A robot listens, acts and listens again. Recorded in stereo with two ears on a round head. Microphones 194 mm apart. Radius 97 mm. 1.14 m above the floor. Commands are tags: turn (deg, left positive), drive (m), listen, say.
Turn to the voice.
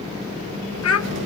<turn deg="70"/>
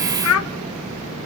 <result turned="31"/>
<turn deg="75"/>
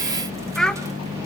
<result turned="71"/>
<say>Found it: a child speaking, straight ahead, under 1 m away.</say>